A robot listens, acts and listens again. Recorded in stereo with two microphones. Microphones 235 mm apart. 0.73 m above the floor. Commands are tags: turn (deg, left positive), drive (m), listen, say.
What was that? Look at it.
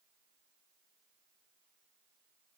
<listen/>
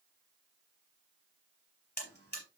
<turn deg="45"/>
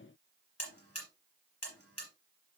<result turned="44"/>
<turn deg="90"/>
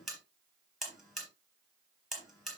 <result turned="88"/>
<say>Found it: a buzzer, straight ahead, 2 to 4 m away.</say>